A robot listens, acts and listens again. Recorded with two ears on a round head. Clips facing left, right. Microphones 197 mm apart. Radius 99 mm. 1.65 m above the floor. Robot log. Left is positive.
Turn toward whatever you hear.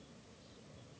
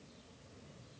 cmd idle
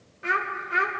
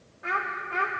note: The child speaking: about 25° left or 155° left.
cmd yaw +25
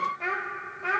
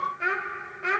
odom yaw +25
note: So it is at 30° right.
cmd yaw -30
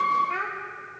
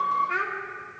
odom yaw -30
note: The child speaking is now 25° right.
cmd yaw -25
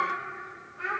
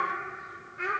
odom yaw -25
note: The child speaking is now 40° right.
cmd yaw -40
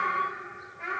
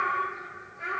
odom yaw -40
note: The child speaking is now 15° right.
cmd yaw -15
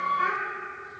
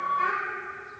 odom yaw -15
end: Facing the child speaking.